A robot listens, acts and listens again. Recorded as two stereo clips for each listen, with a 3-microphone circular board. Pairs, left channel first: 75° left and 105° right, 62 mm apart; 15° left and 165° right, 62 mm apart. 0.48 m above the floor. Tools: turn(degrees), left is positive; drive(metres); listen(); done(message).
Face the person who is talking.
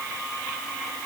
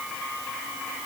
listen()
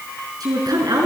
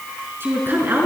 turn(degrees=-105)
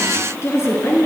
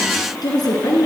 turn(degrees=30)
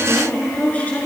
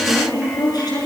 turn(degrees=10)
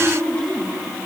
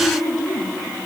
done("Facing the woman speaking.")